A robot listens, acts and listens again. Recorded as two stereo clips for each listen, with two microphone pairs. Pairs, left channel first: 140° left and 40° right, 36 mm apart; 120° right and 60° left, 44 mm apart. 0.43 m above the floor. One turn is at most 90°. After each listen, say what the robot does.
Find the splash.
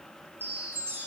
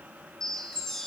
Keep listening.
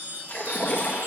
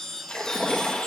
Turn 90° left.
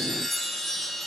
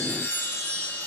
Turn 85° left.
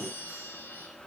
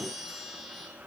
I heard a splash from this way, but can't make it out now.